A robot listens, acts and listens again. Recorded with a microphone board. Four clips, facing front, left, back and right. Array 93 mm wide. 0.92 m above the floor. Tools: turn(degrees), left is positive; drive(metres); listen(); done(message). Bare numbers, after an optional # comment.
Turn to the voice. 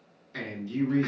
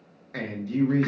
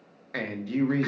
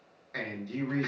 # The man speaking: 175° left.
turn(175)
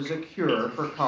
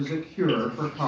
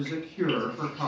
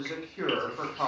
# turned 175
done("Found it: a man speaking, straight ahead.")